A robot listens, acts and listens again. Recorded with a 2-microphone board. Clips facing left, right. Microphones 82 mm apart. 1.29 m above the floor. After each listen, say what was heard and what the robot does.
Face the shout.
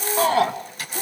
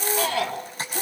The shout: about 35° left or 145° left. Turn 35° left.
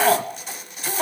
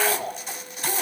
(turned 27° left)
So it is at 115° left. Turn 115° left.
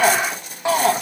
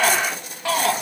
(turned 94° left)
The shout is now 20° left. Turn 20° left.
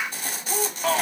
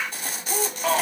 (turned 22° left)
Facing the shout.